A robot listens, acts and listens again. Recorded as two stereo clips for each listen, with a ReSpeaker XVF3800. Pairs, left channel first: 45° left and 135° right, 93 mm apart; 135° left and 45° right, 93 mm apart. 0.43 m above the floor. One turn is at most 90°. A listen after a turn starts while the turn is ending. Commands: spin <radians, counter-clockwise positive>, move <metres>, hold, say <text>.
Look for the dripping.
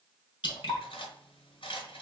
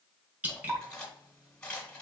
spin 0.44
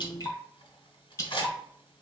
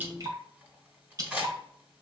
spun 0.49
say Facing the dripping.